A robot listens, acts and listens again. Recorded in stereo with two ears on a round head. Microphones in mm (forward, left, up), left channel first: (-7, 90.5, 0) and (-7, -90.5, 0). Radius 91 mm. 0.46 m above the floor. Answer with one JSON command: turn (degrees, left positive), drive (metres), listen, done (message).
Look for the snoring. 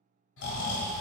{"turn": 65}
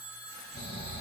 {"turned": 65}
{"turn": 50}
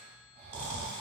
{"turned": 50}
{"turn": -30}
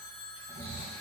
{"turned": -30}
{"turn": -10}
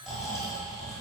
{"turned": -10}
{"done": "Facing the snoring."}